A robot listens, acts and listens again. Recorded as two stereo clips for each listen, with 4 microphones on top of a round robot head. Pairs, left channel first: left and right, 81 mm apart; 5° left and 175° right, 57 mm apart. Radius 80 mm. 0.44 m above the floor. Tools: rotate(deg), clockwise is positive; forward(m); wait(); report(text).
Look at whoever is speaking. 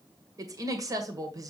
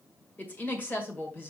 rotate(50)
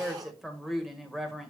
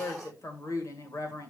report("Found it: a woman speaking, straight ahead.")